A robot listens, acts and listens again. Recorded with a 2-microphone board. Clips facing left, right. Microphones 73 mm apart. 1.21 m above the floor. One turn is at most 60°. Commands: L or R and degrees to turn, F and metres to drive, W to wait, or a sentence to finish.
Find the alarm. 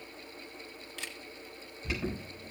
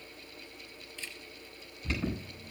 L30
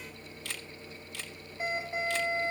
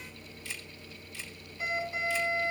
L60
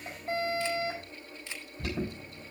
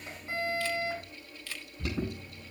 L60
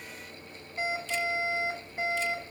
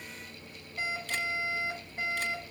L15
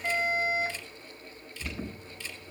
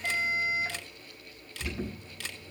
Facing the alarm.